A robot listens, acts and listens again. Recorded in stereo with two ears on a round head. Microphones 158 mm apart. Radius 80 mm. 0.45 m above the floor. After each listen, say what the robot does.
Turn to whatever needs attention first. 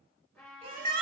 Turn 45° right.
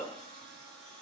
Keep listening.
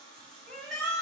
Found it: a shout, straight ahead, 2 to 4 m away.